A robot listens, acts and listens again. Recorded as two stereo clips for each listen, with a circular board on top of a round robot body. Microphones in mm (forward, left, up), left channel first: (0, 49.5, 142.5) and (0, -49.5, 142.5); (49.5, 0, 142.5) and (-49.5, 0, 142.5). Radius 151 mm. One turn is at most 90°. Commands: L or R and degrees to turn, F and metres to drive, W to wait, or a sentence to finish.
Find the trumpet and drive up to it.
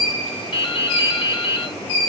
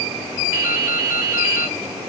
W
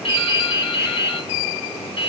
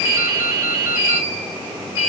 W
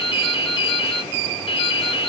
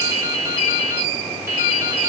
I can't make out a trumpet, only dripping.